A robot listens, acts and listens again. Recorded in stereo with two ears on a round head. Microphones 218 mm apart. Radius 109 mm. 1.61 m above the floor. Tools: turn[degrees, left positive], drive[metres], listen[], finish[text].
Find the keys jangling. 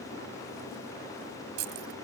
Thought: The keys jangling: about 70° right or 110° right.
Action: turn[-70]
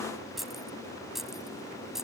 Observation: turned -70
Action: finish[Facing the keys jangling.]